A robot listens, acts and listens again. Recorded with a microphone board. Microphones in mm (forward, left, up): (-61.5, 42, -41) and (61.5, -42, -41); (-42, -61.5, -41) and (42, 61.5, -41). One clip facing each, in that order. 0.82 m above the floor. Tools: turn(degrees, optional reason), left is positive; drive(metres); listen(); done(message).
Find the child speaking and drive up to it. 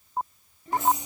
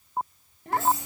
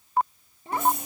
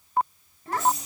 turn(degrees=-60, reason="The child speaking: 60° right.")
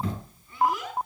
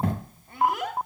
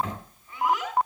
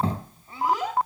drive(metres=1.0)
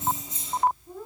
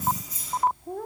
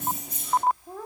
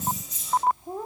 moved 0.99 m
turn(degrees=-15, reason="The child speaking is now 15° right.")
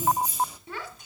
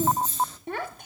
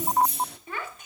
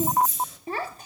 drive(metres=1.0)
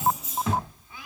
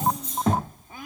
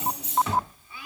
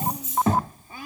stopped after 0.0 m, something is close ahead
turn(degrees=10, reason="The child speaking is now 10° left.")
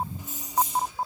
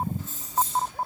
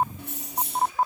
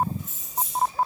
listen()
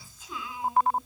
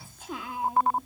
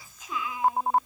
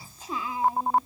done("I am next to the child speaking.")